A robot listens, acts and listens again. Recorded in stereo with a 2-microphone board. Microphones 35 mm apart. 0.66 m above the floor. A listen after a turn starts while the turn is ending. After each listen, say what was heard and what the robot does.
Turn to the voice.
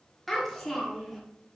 Turn 30° left.
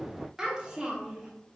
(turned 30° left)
So it is at 20° right. Turn 20° right.
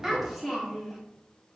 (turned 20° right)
Facing the child speaking.